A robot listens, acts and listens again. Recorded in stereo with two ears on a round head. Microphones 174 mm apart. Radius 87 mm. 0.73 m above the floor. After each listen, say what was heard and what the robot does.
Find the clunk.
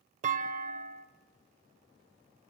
The clunk: about 40° right or 140° right. Turn 40° right.
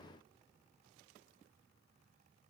Keep listening.
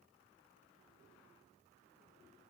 I heard a clunk, but can't make it out now. It was about straight ahead or 100° right.